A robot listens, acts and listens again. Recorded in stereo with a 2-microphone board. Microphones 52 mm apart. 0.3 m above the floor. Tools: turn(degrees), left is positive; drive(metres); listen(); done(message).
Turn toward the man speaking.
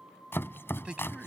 turn(degrees=-20)
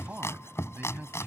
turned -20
turn(degrees=-140)
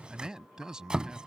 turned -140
turn(degrees=-15)
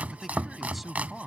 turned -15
done("Facing the man speaking.")